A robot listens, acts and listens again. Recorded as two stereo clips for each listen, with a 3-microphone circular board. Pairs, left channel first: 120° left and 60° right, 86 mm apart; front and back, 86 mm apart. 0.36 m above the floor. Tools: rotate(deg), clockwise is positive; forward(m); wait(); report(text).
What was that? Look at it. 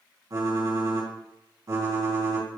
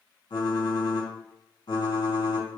rotate(20)
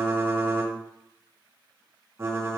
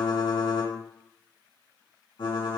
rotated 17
report("Facing the typing on a keyboard.")